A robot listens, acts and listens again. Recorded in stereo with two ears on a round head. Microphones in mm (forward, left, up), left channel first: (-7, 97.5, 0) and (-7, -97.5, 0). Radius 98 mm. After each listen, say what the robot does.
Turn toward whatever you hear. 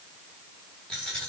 Turn 30° left.
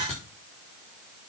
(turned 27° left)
Turn 150° left.
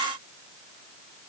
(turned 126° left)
Turn 20° left.
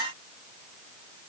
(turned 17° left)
Facing where the dropped coin came from. I can't hear it now.